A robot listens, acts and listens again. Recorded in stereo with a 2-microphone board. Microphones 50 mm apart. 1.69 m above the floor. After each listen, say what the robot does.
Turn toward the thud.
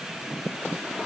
Keep listening.
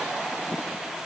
Keep listening.
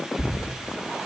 Turn 65° right.
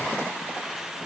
Keep listening.
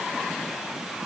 I heard a thud, but can't make it out now. It was about straight ahead or 50° right.